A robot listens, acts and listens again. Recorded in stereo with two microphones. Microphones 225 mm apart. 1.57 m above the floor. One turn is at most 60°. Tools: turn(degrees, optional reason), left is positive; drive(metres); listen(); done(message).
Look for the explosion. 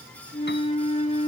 listen()
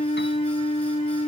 listen()
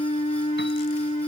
done("I can't make out an explosion to turn to.")